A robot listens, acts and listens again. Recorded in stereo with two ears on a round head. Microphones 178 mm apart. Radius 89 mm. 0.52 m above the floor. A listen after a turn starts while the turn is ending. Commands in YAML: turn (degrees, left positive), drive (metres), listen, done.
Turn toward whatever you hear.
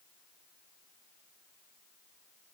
listen: true
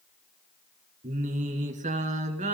turn: -40
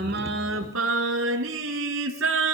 turn: -105
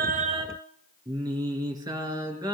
turn: -20
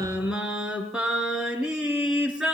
done: "Facing the singing."